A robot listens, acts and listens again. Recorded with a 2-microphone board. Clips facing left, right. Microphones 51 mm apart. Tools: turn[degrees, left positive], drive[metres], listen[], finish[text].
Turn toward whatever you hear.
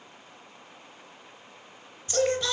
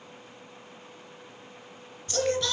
Action: turn[30]
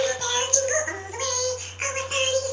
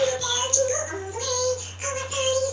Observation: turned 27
Thought: So it is at 140° left.
Action: turn[140]
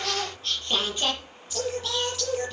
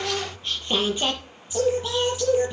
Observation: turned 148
Thought: The singing is now 15° right.
Action: turn[-15]
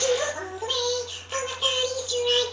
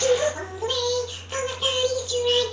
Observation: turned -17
Action: finish[Facing the singing, over 4 m away.]